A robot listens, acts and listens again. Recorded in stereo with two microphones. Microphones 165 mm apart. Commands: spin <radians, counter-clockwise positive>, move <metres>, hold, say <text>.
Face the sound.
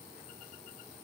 hold
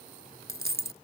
spin -1.57
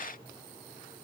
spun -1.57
say Facing where the dropped coin came from. I can't hear it now.